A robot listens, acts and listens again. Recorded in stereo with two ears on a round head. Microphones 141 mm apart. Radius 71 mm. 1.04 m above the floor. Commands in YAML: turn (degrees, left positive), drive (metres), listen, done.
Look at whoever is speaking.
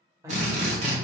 turn: -20
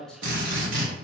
done: "Facing the man speaking, under 1 m away."